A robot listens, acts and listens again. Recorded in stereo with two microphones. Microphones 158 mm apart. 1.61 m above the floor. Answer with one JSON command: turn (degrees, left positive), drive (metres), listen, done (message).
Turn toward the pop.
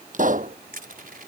{"turn": -55}
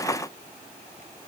{"listen": true}
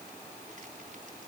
{"done": "I heard a pop, but can't make it out now. It was about straight ahead or 70° right."}